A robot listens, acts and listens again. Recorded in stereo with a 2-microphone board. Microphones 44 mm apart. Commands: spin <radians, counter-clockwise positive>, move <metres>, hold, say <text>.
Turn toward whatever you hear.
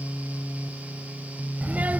spin -0.70
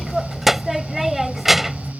say Facing the child speaking.